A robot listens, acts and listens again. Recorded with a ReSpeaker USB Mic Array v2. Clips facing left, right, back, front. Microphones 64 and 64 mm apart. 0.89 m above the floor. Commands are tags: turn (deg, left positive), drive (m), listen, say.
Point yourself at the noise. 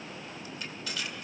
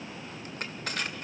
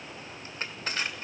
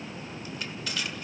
<turn deg="-130"/>
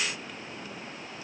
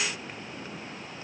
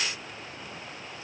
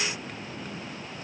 <listen/>
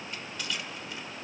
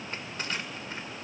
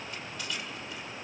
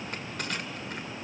<turn deg="-40"/>
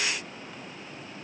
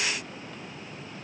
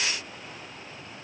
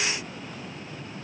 <listen/>
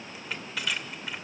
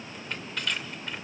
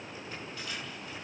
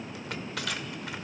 <say>Found it: crushing, straight ahead, 1 to 2 m away.</say>